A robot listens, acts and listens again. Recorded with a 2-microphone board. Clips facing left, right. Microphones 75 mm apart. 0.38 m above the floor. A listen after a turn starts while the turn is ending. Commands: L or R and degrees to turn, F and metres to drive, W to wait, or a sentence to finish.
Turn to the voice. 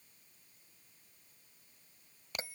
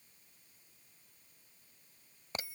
W
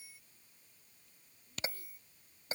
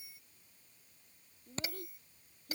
R60
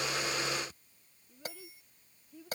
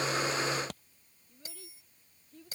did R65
Found it: a child speaking, straight ahead.